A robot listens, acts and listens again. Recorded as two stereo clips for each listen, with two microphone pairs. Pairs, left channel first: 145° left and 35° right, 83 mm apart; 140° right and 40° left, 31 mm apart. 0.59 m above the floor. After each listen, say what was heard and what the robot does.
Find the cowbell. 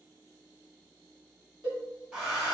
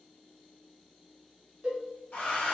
The cowbell: 15° right. Turn 15° right.
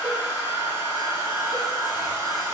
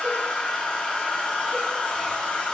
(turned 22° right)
Keep listening.
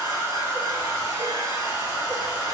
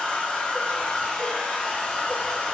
Keep listening.
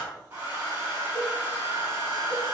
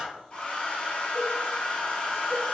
Facing where the cowbell came from. I can't hear it now.